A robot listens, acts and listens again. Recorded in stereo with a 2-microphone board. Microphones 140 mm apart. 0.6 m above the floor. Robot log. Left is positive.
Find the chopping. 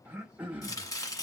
note: The chopping: about 25° left or 155° left.
cmd yaw +25
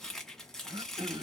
end: Found it: chopping, straight ahead, 1 to 2 m away.